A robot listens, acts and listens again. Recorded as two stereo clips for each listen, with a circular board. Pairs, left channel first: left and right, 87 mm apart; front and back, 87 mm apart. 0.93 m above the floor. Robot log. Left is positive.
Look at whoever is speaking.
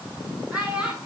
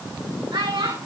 note: The child speaking: 170° right.
cmd yaw -170
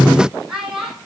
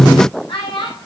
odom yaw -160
note: The child speaking is now 10° right.
cmd yaw -10
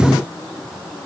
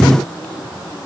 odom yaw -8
cmd idle
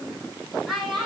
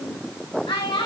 end: Found it: a child speaking, straight ahead, over 4 m away.